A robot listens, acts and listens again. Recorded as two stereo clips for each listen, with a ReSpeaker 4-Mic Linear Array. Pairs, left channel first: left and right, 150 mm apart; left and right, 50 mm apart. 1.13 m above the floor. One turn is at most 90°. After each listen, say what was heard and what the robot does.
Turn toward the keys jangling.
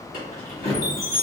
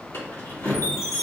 The keys jangling: about 65° left or 115° left. Turn 65° left.
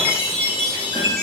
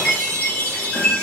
Keep listening.
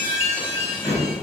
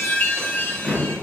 So it is at 15° left. Turn 15° left.
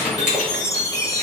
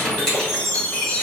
Found it: keys jangling, straight ahead, 2 to 4 m away.